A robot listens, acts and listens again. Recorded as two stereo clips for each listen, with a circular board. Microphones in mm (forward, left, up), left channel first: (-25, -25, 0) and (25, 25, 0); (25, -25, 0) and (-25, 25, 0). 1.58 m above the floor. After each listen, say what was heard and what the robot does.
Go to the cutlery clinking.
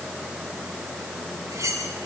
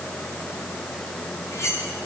Drive 1.0 m forward.
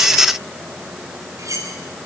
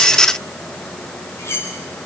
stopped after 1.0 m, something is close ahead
Something is in my way. I am facing the cutlery clinking but have not reached it.